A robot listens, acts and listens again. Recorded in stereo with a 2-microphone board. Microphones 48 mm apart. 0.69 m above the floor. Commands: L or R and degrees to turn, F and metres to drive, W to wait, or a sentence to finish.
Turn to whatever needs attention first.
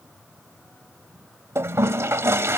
W
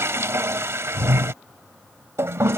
W
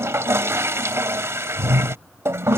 I can't make out anything urgent, only a toilet flushing.